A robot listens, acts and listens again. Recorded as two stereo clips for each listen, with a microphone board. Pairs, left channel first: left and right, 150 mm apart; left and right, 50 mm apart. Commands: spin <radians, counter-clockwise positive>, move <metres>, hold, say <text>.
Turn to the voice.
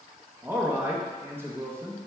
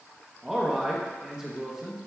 spin -0.26
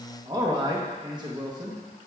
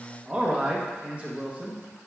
spin -2.62
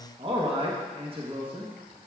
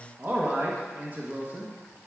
spin -0.79
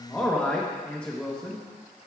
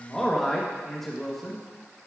spin 0.17
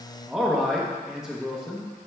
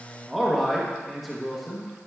say Facing the man speaking, 1 to 2 m away.